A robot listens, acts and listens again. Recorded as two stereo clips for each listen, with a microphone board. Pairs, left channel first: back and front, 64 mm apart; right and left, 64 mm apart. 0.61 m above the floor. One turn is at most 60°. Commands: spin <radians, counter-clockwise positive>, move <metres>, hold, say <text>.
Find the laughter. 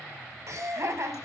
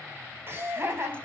spin 0.70
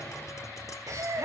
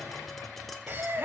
spin 0.61
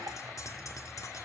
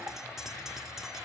hold
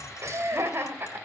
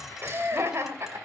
spin 0.87
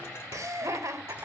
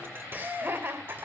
spin 0.70
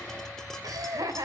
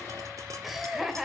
say Facing the laughter.